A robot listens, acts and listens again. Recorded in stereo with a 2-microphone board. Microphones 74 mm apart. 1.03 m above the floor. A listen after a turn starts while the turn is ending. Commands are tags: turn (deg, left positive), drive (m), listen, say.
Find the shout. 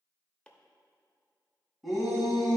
<turn deg="30"/>
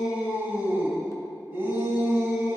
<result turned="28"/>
<turn deg="-30"/>
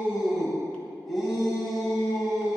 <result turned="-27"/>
<say>Found it: a shout, straight ahead, 2 to 4 m away.</say>